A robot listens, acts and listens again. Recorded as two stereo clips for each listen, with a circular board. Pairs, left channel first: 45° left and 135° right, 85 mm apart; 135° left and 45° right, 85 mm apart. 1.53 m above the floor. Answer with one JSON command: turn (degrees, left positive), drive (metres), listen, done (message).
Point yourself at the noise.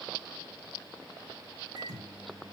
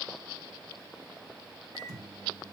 {"turn": -90}
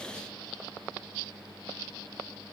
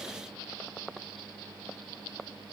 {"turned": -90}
{"listen": true}
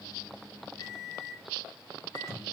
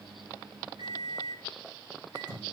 {"turn": -10}
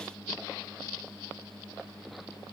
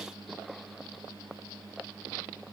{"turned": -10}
{"done": "Found it: a microwave, straight ahead, 2 to 4 m away."}